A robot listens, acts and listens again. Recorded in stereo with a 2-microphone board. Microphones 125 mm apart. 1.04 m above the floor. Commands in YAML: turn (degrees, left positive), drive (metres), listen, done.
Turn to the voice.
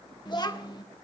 turn: 35
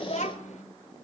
turn: 110
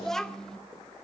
done: "Found it: a child speaking, straight ahead."